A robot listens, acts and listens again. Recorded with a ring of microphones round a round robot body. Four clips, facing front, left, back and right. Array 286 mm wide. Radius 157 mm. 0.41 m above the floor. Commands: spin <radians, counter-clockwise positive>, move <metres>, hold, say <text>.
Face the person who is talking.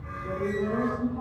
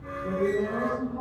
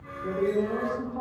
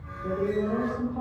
spin -2.53
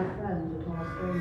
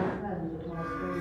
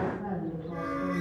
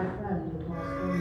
spin -0.26
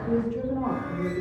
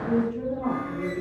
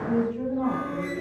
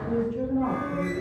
say Facing the woman speaking, 2 to 4 m away.